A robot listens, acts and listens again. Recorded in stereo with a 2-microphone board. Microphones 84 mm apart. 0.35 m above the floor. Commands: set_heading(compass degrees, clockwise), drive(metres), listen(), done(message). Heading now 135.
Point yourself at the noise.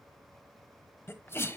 set_heading(105)
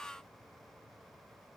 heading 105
listen()
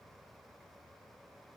done("I heard a sneeze, but can't make it out now. It was about straight ahead or 120° left.")